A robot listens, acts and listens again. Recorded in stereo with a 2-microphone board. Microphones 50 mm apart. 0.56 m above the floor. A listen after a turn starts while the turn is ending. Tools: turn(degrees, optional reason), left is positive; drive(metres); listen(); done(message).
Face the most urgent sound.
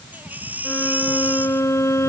turn(degrees=-35, reason="The baby crying: about 35° right or 145° right.")
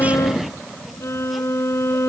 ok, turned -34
listen()
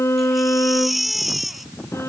done("Found it: a baby crying, straight ahead.")